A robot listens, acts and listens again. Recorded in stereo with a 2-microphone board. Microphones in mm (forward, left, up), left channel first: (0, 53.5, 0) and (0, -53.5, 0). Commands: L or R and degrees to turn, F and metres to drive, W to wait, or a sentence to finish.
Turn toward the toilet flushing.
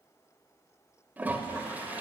R20
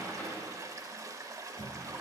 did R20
R135
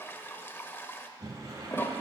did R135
L25
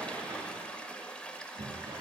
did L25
L15
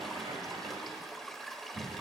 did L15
Found it: a toilet flushing, straight ahead.